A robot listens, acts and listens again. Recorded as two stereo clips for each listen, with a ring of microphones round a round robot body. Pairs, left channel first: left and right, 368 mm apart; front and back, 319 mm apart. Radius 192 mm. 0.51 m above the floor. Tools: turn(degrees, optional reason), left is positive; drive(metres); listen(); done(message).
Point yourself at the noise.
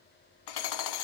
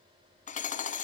turn(degrees=65, reason="The hammering: 65° left.")
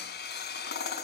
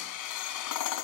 turn(degrees=25, reason="The hammering is now 25° left.")
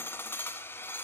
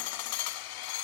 done("Found it: hammering, straight ahead.")